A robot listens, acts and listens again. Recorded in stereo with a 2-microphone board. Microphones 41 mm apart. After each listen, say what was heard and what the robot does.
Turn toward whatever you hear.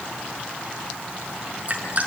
The dripping: about 40° right or 140° right. Turn 40° right.
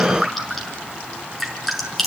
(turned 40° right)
Facing the dripping.